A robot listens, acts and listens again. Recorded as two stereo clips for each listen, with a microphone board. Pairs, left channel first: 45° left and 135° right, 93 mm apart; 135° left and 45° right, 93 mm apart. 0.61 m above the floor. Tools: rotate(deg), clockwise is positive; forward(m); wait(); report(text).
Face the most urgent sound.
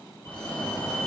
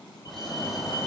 rotate(-105)
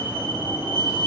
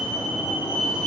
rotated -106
report("Facing the fire alarm.")